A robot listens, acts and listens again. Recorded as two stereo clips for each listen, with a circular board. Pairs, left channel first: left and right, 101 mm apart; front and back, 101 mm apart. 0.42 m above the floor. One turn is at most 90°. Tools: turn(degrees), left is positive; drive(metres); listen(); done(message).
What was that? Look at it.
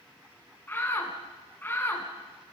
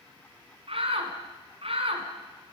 turn(degrees=90)
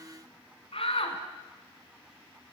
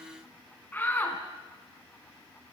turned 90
turn(degrees=70)
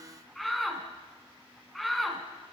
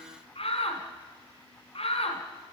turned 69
done("Facing the shout.")